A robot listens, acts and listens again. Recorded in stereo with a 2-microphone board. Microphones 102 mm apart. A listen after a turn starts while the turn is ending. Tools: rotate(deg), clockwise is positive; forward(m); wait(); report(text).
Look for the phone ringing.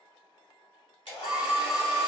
rotate(40)
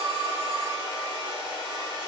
wait()
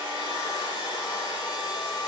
wait()
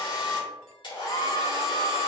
report("Found it: a phone ringing, straight ahead, under 1 m away.")